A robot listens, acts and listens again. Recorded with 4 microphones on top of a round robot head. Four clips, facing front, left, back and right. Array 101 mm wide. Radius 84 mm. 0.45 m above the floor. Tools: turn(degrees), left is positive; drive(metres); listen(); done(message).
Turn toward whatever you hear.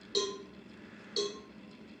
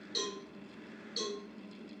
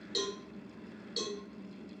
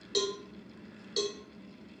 turn(degrees=-80)
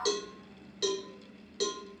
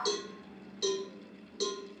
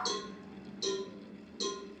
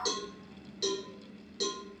done("Found it: a cowbell, straight ahead, under 1 m away.")